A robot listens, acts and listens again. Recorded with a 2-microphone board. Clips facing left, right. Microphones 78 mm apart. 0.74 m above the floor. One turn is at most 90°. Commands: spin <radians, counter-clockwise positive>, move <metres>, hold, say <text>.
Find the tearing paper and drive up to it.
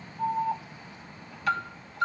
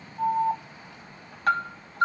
hold
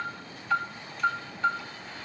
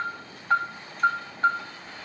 hold
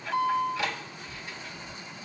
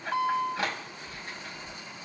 say I can't make out tearing paper to turn to.